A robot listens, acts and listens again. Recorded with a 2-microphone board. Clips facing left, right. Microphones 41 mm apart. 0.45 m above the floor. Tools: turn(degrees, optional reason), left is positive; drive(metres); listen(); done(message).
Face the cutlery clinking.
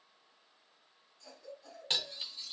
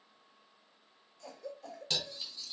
turn(degrees=35, reason="The cutlery clinking: about 35° left or 145° left.")
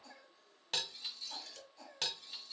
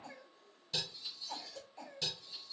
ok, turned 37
turn(degrees=110, reason="So it is at 110° left.")
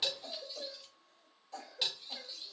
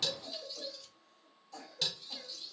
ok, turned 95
turn(degrees=15, reason="The cutlery clinking is now 15° left.")
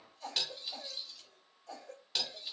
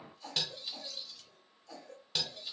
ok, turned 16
done("Found it: cutlery clinking, straight ahead.")